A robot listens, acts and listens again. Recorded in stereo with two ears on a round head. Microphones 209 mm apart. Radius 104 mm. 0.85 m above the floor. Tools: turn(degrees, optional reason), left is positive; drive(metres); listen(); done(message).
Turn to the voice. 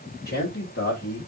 turn(degrees=50, reason="The man speaking: about 50° left or 130° left.")
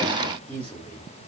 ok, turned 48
turn(degrees=10, reason="So it is at 10° left.")
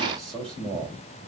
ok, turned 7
done("Facing the man speaking.")